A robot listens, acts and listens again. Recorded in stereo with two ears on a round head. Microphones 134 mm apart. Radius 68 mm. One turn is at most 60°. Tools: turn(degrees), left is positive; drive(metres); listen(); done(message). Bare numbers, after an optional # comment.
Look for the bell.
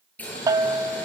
# The bell: about 25° right or 155° right.
turn(-25)
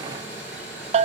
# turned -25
# So it is at 130° right.
turn(-60)
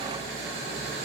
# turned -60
# Nothing new. It was at 70° right.
turn(-60)
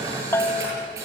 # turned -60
# The bell is now 15° left.
turn(15)
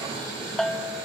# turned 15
done("Found it: a bell, straight ahead, under 1 m away.")